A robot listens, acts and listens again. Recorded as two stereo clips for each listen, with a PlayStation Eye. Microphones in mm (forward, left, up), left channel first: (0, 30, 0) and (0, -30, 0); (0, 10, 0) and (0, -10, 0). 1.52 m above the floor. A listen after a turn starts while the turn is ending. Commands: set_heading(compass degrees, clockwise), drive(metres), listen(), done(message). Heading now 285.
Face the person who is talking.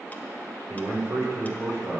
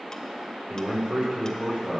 set_heading(335)
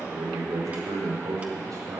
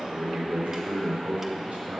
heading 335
set_heading(55)
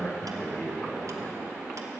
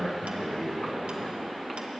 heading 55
set_heading(35)
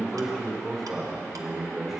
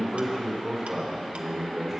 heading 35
done("Facing the man speaking.")